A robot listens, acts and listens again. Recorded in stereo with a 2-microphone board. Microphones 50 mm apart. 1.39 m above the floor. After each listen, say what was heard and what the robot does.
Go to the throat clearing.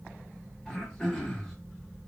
Turn 30° left.
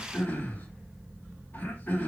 So it is at 140° left. Turn 140° left.
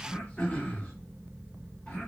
The throat clearing is now 20° left. Turn 20° left.
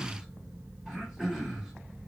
Drive 1.0 m forward.
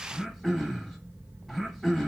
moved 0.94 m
Drive 1.0 m forward.
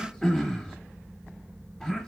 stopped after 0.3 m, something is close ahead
The throat clearing is now 10° left. Turn 10° left.
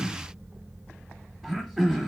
Arrived at the throat clearing, straight ahead.